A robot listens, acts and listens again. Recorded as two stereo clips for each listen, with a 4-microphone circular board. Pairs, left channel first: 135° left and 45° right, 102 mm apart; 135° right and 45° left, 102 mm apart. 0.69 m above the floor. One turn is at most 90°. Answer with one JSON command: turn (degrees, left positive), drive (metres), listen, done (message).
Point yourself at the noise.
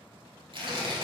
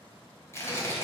{"turn": -75}
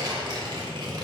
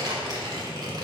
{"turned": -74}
{"done": "Facing the tearing paper."}